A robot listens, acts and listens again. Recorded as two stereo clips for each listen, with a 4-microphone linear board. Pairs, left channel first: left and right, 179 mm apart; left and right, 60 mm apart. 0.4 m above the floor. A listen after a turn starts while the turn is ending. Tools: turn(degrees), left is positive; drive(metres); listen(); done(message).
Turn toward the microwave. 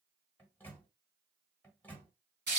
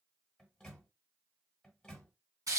turn(degrees=30)
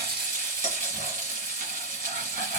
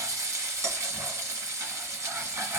listen()
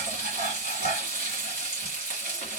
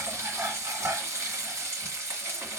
listen()
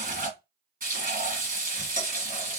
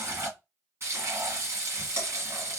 done("I heard a microwave, but can't make it out now. It was about 20° right or 140° left.")